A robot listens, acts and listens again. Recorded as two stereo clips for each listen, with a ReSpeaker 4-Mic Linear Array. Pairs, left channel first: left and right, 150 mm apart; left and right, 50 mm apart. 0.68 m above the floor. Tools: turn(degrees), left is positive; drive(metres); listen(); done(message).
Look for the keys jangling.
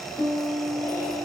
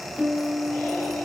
listen()
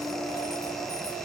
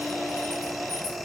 listen()
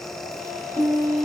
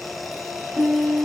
done("I can't make out keys jangling to turn to.")